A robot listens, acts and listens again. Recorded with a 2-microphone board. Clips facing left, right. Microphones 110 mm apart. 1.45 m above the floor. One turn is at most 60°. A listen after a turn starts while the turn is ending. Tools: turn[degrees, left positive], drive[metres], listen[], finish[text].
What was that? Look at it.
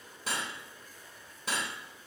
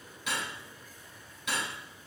Thought: The cutlery clinking: about 35° left or 145° left.
Action: turn[35]
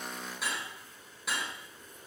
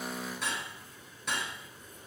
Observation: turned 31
Action: finish[Facing the cutlery clinking.]